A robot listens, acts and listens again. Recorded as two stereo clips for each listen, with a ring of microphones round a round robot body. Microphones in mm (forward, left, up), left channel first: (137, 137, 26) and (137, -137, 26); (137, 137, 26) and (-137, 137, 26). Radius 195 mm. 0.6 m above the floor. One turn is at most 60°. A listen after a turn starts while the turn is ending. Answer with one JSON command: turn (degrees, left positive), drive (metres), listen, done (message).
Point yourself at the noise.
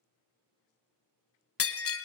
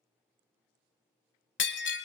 {"turn": 50}
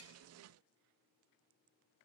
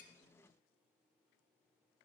{"done": "Facing where the breaking glass came from. I can't hear it now."}